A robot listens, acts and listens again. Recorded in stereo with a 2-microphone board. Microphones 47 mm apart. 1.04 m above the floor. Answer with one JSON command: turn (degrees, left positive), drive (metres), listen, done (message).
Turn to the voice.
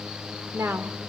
{"turn": -65}
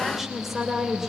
{"done": "Found it: a woman speaking, straight ahead."}